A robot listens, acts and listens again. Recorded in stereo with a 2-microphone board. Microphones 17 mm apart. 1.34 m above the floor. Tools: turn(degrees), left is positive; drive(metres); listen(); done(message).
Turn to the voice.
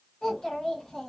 turn(degrees=40)
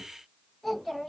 done("Facing the child speaking.")